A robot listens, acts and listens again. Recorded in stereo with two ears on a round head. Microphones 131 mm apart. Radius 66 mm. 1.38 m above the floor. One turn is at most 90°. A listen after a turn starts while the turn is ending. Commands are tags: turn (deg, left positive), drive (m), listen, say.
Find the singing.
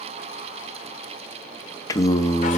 <turn deg="20"/>
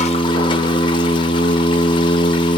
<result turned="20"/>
<turn deg="90"/>
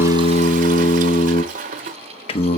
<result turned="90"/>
<turn deg="45"/>
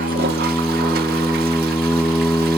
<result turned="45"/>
<say>Found it: singing, straight ahead, under 1 m away.</say>